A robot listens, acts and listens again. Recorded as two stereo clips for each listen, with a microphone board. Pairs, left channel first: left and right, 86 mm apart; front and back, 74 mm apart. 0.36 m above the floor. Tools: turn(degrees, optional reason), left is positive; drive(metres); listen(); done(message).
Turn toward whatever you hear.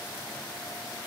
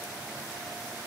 listen()
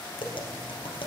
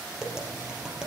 turn(degrees=95, reason="The tapping: 95° left.")
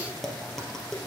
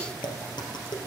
done("Found it: tapping, straight ahead, 2 to 4 m away.")